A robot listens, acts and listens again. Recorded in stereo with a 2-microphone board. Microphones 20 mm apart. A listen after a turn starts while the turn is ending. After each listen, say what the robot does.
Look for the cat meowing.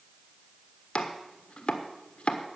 Keep listening.
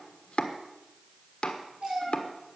Turn 50° right.
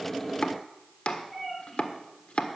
Facing the cat meowing, over 4 m away.